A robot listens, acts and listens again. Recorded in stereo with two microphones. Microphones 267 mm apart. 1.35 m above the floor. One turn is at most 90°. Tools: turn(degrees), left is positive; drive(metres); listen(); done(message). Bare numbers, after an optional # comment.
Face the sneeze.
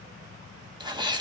# The sneeze: about 15° right or 165° right.
turn(-15)
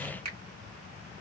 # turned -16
listen()
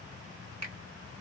done("I heard a sneeze, but can't make it out now. It was about straight ahead or 150° right.")